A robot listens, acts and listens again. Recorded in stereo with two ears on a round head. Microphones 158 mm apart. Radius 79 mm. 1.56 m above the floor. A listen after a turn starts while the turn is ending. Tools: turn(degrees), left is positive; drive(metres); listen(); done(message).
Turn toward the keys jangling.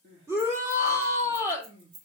turn(degrees=-75)
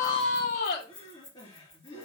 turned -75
turn(degrees=10)
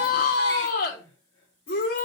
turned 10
listen()
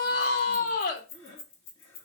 turn(degrees=35)
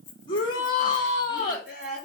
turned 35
listen()
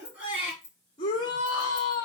turn(degrees=15)
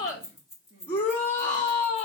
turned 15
done("Found it: keys jangling, straight ahead, 2 to 4 m away.")